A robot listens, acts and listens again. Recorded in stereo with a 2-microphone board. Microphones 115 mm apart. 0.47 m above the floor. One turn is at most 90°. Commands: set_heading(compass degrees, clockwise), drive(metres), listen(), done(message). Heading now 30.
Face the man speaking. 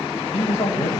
set_heading(320)
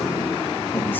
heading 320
set_heading(300)
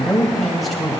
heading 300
done("Found it: a man speaking, straight ahead.")